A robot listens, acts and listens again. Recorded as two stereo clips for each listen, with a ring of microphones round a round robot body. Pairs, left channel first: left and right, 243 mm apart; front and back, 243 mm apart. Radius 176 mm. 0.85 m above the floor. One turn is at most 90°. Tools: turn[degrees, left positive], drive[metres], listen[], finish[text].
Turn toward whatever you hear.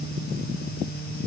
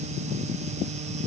Action: listen[]
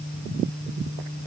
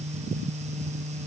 Action: listen[]
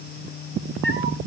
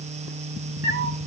Thought: The cat meowing: 150° left.
Action: turn[90]
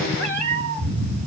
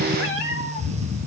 Thought: The cat meowing is now 40° left.
Action: turn[40]
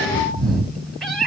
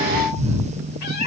Action: finish[Found it: a cat meowing, straight ahead, 2 to 4 m away.]